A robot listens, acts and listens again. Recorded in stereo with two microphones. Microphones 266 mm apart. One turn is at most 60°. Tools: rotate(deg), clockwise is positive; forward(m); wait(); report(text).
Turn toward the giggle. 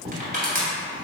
wait()
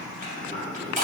wait()
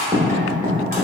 report("I can't make out a giggle, only writing and crushing.")